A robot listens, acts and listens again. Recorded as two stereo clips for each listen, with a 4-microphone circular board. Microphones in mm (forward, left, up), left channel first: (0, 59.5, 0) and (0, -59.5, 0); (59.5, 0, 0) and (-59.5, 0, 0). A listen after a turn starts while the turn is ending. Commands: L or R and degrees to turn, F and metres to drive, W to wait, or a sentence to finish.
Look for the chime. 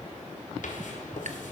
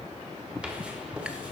W
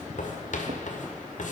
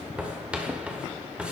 W
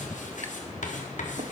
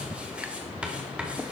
I can't make out a chime, only writing.